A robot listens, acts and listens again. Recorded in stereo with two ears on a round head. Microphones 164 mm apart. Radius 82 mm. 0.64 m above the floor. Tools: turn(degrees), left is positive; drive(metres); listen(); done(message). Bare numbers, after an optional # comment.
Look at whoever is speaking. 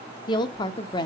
# The woman speaking: about 25° left or 155° left.
turn(25)
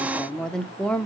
done("Found it: a woman speaking, straight ahead.")